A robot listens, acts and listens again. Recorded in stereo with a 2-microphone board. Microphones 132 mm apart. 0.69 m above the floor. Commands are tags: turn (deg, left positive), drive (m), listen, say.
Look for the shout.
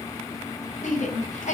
<turn deg="65"/>
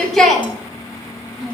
<say>Facing the shout.</say>